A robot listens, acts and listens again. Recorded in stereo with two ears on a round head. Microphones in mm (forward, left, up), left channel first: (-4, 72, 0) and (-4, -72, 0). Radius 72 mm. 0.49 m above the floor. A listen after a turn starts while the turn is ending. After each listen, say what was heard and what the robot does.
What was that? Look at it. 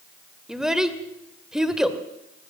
Turn 30° right.
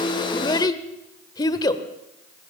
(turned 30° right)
So it is at 30° left. Turn 30° left.
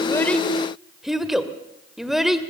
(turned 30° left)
Facing the child speaking.